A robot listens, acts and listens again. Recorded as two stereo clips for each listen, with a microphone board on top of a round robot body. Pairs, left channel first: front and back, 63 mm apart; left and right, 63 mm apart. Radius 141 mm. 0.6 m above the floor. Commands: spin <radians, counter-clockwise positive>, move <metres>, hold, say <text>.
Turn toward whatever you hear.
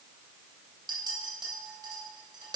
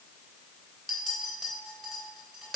spin -3.05
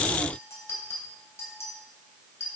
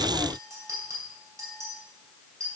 spin -0.87
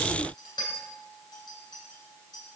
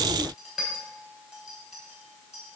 spin -0.17
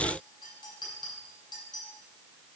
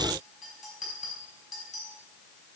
say Facing the clink.